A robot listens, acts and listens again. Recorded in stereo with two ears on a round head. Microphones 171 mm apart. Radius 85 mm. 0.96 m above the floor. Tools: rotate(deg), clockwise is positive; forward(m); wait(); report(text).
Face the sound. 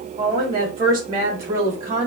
rotate(30)
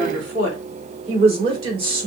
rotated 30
rotate(25)
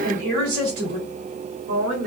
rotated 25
rotate(135)
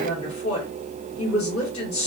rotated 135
rotate(-35)
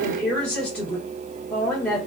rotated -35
report("Facing the woman speaking, 2 to 4 m away.")